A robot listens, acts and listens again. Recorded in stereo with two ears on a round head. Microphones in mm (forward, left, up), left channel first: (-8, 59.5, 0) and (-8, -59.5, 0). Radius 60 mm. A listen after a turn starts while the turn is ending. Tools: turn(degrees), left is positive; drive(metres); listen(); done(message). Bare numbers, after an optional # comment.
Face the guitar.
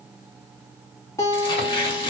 # The guitar: about 20° left or 160° left.
turn(20)
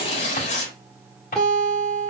done("Facing the guitar.")